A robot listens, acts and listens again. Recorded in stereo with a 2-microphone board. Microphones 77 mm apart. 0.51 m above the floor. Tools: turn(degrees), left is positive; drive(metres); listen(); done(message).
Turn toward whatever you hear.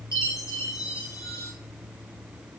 turn(degrees=40)
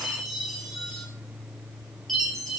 done("Found it: a chime, straight ahead, 2 to 4 m away.")